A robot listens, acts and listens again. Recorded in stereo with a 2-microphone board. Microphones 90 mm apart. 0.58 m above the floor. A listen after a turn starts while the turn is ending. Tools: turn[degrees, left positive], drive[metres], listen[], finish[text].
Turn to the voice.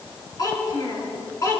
Thought: The child speaking: about 35° left or 145° left.
Action: turn[35]
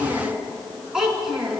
Thought: So it is at 10° right.
Action: turn[-10]
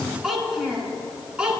Thought: The child speaking is now 10° right.
Action: turn[-10]
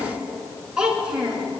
Thought: The child speaking is now 10° right.
Action: turn[-10]
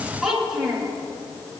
Action: finish[Facing the child speaking.]